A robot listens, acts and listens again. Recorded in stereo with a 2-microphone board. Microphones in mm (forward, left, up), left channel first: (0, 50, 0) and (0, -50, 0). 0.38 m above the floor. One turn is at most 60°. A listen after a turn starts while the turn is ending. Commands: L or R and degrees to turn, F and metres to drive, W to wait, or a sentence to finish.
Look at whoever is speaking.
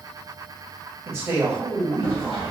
R25
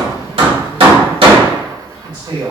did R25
R60
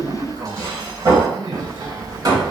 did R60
R60
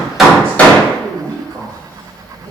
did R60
R30
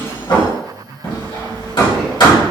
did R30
L10
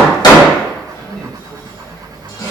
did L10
W
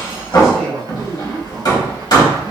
Found it: a man speaking, straight ahead, 1 to 2 m away.